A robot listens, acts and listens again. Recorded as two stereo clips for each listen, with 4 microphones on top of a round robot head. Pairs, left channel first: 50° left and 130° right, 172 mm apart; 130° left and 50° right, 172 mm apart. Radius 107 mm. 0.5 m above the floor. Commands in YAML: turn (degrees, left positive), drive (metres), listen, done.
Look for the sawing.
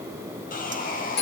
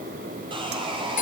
turn: 10
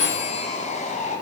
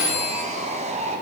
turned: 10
done: "Found it: sawing, straight ahead."